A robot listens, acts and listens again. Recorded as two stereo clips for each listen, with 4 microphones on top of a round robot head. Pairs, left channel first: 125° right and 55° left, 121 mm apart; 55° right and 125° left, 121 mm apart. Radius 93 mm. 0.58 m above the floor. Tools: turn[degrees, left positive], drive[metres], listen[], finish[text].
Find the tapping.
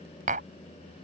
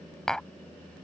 Thought: The tapping: 30° left.
Action: turn[30]
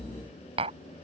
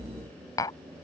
Thought: The tapping is now 10° left.
Action: turn[10]
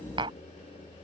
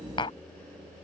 Action: finish[Facing the tapping.]